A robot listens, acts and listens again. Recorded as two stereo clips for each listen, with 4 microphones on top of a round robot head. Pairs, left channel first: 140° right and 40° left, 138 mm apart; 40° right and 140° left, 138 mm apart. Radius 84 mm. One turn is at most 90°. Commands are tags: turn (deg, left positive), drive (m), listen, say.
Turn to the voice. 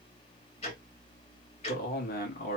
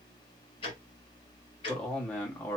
<turn deg="-90"/>
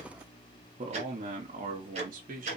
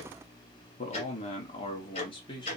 <turn deg="15"/>
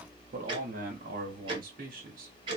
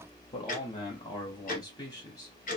<turn deg="20"/>
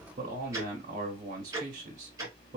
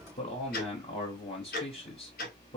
<turn deg="10"/>
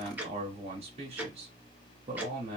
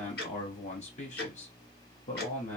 <say>Facing the man speaking, 1 to 2 m away.</say>